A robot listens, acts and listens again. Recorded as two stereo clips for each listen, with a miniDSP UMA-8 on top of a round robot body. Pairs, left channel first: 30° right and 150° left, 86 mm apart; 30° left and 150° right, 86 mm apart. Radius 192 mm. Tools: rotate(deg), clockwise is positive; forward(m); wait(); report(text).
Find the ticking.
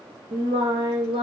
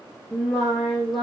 wait()
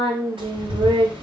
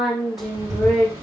rotate(-160)
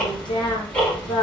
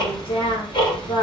rotate(-45)
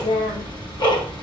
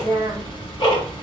report("Facing the ticking.")